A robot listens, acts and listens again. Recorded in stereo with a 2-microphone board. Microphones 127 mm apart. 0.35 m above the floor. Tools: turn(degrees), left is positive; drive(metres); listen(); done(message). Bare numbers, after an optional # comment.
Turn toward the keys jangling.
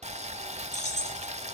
# The keys jangling: about 65° left or 115° left.
turn(65)
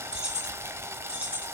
# So it is at 10° right.
turn(-10)
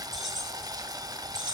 done("Facing the keys jangling, over 4 m away.")